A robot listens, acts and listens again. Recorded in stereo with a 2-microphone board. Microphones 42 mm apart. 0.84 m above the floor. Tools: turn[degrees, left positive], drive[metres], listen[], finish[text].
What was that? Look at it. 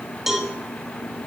Action: turn[-30]
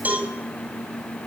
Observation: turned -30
Thought: So it is at 140° right.
Action: turn[-140]
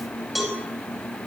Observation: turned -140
Action: finish[Facing the cowbell, over 4 m away.]